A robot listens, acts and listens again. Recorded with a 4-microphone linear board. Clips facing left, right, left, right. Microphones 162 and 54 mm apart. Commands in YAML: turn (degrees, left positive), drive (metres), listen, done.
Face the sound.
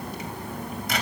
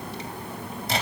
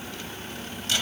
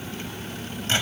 turn: -30
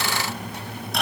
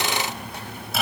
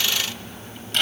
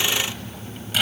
done: "Facing the microwave, 2 to 4 m away."